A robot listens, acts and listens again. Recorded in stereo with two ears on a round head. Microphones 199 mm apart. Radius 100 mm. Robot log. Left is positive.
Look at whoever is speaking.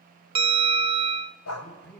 cmd yaw +30
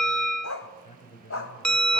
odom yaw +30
note: So it is at 140° left.
cmd yaw +140
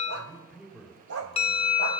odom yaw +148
note: The man speaking is now 10° right.
cmd yaw -10
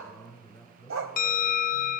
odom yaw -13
end: Found it: a man speaking, straight ahead, over 4 m away.